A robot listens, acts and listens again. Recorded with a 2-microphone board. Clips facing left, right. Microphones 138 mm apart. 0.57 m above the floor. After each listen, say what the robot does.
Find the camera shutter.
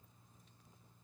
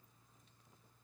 Keep listening.
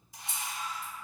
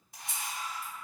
Turn 60° right.
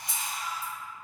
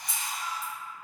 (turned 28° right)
Turn 90° right.
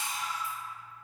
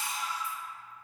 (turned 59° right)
Turn 35° right.
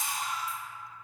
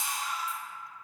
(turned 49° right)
Turn 15° left.
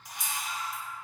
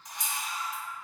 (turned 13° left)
Facing the camera shutter.